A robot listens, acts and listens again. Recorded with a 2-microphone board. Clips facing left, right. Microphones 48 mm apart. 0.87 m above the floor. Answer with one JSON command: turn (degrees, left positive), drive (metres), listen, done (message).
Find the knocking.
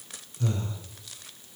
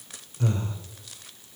{"listen": true}
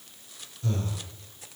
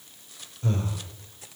{"listen": true}
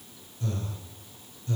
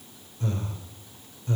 {"done": "I can't make out knocking to turn to."}